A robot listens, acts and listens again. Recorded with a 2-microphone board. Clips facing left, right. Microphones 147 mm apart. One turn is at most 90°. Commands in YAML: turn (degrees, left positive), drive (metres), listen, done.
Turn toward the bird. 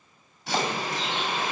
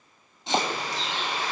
turn: 70
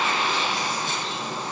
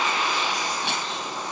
turn: 30
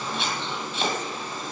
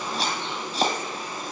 turn: -15
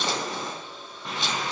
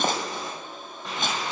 done: "Facing the bird."